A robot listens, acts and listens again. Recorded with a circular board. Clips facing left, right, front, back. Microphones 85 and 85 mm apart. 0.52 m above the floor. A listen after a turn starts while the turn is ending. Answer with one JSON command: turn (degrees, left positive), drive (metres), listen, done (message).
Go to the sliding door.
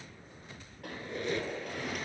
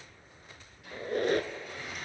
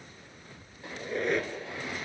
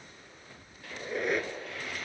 {"turn": 65}
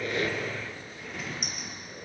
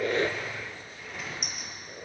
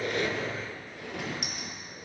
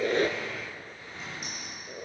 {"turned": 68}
{"drive": 1.0}
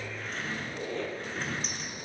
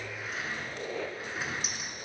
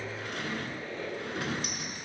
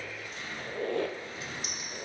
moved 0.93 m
{"turn": -10}
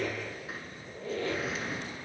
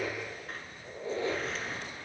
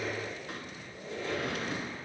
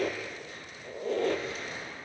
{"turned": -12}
{"drive": 1.0}
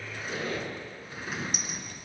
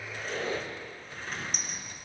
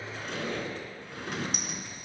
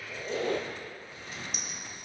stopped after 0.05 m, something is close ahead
{"done": "Arrived at the sliding door, straight ahead."}